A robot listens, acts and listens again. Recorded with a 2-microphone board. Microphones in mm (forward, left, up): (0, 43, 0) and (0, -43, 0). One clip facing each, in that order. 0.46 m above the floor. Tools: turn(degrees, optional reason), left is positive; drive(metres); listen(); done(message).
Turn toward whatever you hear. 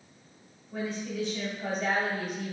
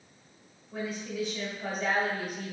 turn(degrees=-30)
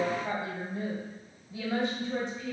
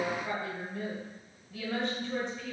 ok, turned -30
turn(degrees=25, reason="So it is at 25° left.")
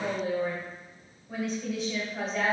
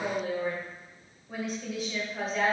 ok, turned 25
done("Facing the woman speaking, 1 to 2 m away.")